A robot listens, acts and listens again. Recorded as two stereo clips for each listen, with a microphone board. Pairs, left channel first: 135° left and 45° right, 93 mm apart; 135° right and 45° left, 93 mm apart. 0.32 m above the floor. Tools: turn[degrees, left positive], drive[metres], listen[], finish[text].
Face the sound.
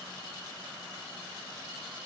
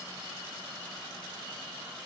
Action: listen[]
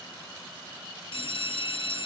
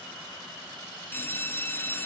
Thought: The bell: 155° left.
Action: turn[155]
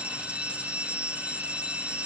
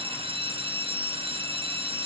Thought: The bell is now 30° left.
Action: turn[30]
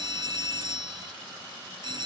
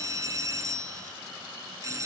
Thought: The bell is now 10° right.
Action: turn[-10]
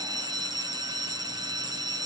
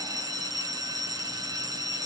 Action: finish[Facing the bell, 1 to 2 m away.]